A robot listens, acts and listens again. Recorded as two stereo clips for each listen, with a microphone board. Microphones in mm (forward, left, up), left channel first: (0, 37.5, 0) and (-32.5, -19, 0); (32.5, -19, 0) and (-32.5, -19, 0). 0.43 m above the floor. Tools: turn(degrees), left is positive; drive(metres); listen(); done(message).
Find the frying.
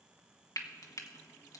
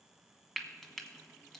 turn(degrees=85)
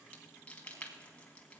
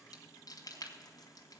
turn(degrees=-10)
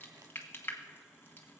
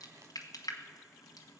done("Found it: frying, straight ahead.")